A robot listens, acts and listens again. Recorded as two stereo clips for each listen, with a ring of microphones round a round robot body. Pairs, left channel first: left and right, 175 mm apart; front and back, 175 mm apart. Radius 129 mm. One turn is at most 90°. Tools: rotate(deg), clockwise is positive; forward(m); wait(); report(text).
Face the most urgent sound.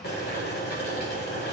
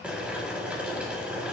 wait()
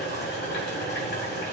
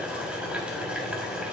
wait()
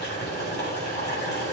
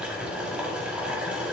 report("I can't make out anything urgent to turn to.")